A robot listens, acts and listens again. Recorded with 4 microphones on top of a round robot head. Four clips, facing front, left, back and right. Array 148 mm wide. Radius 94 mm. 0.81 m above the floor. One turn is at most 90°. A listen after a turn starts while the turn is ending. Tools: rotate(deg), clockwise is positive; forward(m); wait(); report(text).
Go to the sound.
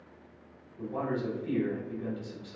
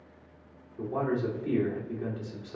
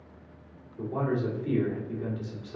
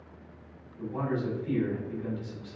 rotate(-90)
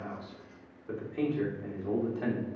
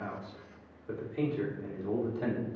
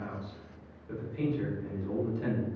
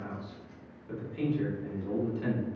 rotate(-30)
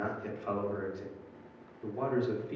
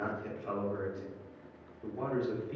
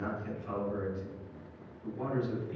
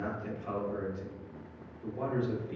forward(1.0)
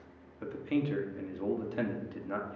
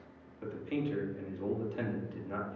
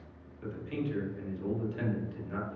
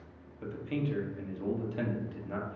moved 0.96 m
forward(1.0)
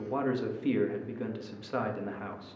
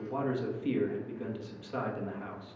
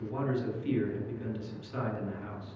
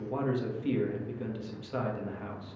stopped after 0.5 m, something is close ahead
report("I am next to the man speaking.")